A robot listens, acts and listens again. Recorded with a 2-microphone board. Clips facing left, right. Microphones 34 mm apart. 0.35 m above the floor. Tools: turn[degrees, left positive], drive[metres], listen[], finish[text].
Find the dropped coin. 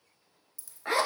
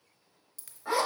Thought: The dropped coin: about 70° right or 110° right.
Action: turn[-70]
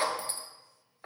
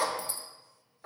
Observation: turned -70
Action: listen[]
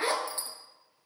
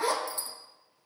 Action: finish[I heard a dropped coin, but can't make it out now. It was about straight ahead or 40° right.]